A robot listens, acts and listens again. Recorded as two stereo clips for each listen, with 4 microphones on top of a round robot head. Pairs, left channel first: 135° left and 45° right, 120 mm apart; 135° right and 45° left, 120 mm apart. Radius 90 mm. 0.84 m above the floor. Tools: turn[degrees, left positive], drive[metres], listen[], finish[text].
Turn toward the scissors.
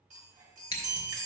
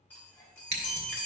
Thought: The scissors: 75° left.
Action: turn[75]
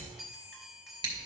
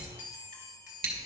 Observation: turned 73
Action: finish[Found it: scissors, straight ahead.]